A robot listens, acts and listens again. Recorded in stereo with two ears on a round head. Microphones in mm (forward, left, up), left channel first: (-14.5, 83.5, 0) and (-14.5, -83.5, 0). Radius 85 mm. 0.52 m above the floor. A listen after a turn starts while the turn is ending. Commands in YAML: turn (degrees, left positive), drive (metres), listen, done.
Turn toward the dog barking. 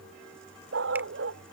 turn: -90
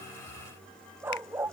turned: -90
turn: -10
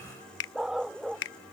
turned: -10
done: "Found it: a dog barking, straight ahead."